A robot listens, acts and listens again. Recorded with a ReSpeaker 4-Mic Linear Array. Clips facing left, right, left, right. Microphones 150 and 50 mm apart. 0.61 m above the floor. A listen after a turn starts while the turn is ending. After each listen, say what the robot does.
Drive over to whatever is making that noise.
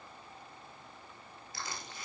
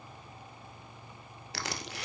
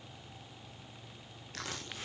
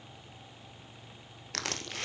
Turn 90° right.
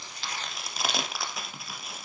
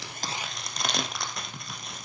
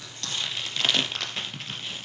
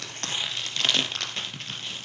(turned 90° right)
Drive 1.0 m forward.
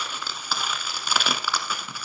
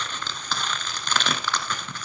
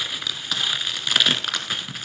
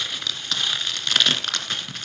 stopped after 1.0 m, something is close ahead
Turn 10° left.
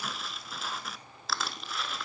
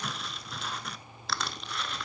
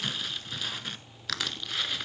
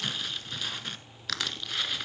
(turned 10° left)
Arrived at the crushing, straight ahead.